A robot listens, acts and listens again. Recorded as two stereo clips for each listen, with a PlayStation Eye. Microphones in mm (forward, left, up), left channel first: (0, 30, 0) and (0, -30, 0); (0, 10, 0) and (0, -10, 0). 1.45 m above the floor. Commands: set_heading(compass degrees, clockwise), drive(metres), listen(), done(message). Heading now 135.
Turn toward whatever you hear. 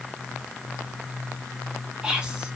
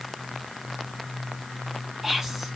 set_heading(150)
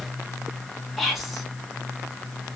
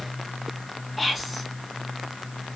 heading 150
done("Found it: whispering, straight ahead.")